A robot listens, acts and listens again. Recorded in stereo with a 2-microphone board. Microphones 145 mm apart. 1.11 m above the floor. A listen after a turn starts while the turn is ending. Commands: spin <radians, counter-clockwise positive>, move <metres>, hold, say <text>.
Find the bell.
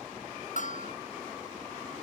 spin 1.05
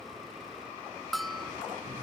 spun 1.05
say Facing the bell.